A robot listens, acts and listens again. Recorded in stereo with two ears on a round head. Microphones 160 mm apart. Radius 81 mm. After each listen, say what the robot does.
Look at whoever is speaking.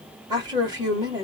Turn 20° right.
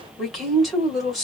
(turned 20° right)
Found it: a woman speaking, straight ahead.